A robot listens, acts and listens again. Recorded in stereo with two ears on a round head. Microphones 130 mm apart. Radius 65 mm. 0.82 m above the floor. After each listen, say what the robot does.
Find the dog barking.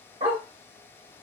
Turn 40° right.
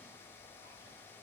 Keep listening.
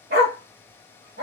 Turn 100° right.
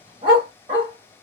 Turn 40° right.
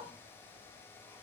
Keep listening.
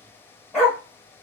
Found it: a dog barking, straight ahead.